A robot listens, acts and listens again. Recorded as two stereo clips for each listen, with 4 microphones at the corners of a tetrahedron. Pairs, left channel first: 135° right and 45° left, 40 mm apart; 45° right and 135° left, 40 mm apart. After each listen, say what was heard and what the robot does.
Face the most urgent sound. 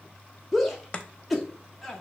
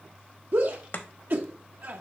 The shout: 130° left. Turn 130° left.
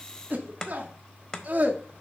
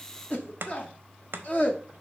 Found it: a shout, straight ahead.